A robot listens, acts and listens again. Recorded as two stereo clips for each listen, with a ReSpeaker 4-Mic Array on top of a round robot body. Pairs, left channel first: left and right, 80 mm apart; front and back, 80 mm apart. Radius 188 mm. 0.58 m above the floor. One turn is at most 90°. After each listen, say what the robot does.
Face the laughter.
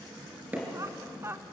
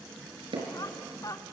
Turn 35° right.
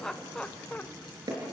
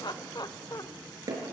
Turn 25° left.
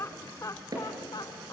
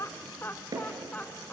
Turn 70° left.
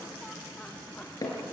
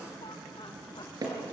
Keep listening.
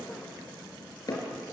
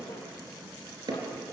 Keep listening.
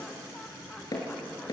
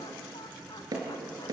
I heard laughter from this way, but can't make it out now.